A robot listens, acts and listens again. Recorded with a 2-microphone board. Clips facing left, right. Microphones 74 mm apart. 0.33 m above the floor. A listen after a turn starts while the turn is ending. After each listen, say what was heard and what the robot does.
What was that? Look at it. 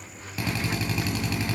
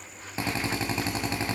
The drill: about 30° right or 150° right. Turn 30° right.
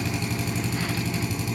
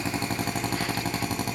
So it is at 115° right. Turn 115° right.
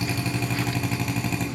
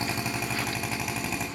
Facing the drill.